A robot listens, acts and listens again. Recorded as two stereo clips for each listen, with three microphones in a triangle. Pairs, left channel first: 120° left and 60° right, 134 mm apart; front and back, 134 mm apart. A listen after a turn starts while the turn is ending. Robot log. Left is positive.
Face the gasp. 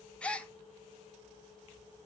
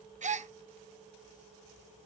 note: The gasp: 160° right.
cmd yaw -160
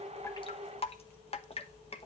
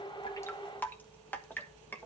end: Facing where the gasp came from. I can't hear it now.